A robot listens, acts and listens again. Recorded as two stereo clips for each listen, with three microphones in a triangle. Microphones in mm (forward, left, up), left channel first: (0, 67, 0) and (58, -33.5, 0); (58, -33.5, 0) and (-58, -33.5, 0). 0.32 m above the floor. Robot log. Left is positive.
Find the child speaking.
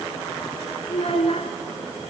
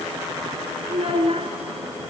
note: The child speaking: 150° left.
cmd yaw +150
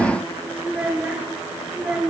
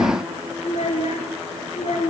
note: The child speaking is now 20° left.
cmd yaw +20
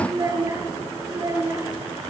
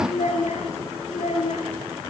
end: Found it: a child speaking, straight ahead.